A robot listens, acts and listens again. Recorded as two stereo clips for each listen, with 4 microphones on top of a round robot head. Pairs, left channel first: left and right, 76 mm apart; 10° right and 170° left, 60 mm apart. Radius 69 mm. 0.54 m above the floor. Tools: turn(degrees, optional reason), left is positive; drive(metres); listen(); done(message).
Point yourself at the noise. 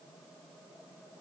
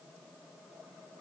listen()
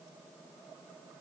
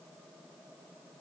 listen()
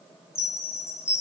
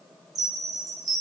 turn(degrees=145, reason="The chime: 145° left.")
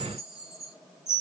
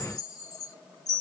done("Facing the chime, under 1 m away.")